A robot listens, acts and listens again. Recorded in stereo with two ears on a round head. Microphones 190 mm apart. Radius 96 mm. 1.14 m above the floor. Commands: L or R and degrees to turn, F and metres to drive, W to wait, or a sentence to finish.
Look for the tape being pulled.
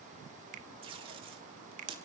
R25
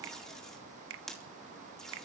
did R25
Found it: tape being pulled, straight ahead, 2 to 4 m away.